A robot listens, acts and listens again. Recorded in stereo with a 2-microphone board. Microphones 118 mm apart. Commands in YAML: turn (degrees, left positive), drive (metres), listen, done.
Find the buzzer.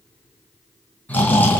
listen: true
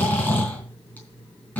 listen: true
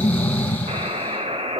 turn: -65
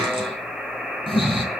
done: "Facing the buzzer."